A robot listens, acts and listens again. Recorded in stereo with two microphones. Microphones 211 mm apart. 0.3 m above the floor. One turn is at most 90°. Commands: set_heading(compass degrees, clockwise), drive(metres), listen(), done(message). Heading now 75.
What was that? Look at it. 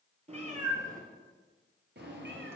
set_heading(145)
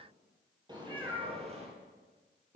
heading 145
set_heading(185)
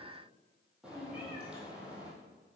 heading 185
done("Facing the cat meowing.")